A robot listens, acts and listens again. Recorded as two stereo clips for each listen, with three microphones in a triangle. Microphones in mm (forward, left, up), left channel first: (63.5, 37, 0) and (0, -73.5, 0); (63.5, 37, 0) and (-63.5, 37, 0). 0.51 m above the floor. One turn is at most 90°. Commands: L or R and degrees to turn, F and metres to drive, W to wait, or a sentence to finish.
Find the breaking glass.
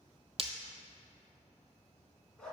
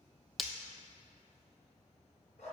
R90
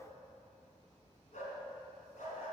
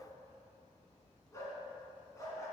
Facing where the breaking glass came from. I can't hear it now.